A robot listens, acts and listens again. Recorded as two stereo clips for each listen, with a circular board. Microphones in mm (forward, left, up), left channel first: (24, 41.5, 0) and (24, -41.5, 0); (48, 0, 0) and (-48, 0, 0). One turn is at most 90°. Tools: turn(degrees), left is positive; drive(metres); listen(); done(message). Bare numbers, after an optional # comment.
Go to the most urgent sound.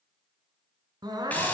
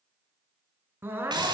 # The crying: 115° right.
turn(-90)
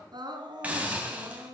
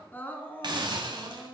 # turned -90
# The crying is now 70° right.
turn(-70)
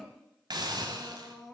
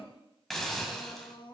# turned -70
drive(1.0)
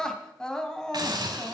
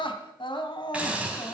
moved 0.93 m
# The crying is now 10° left.
turn(10)
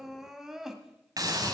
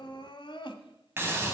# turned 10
drive(1.0)
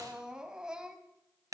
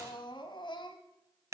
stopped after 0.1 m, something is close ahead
# The crying is now 10° right.
turn(-10)
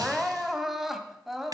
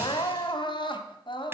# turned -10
done("I am next to the crying.")